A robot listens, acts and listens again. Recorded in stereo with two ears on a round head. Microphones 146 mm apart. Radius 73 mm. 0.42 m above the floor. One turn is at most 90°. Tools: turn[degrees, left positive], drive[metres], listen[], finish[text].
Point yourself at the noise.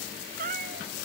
Thought: The cat meowing: about 50° right or 130° right.
Action: turn[-50]
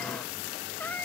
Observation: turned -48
Thought: So it is at 10° left.
Action: turn[10]
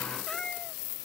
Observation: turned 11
Action: finish[Found it: a cat meowing, straight ahead.]